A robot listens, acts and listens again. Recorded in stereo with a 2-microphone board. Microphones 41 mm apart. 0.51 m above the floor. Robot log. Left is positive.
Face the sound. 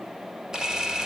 note: The camera shutter: about 15° right or 165° right.
cmd yaw -15
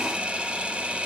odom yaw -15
note: So it is at 150° right.
cmd yaw -150
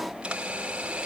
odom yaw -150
note: The camera shutter is now 30° right.
cmd yaw -30
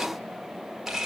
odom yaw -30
note: The camera shutter is now 10° right.
cmd yaw -10
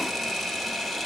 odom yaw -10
end: Facing the camera shutter, 2 to 4 m away.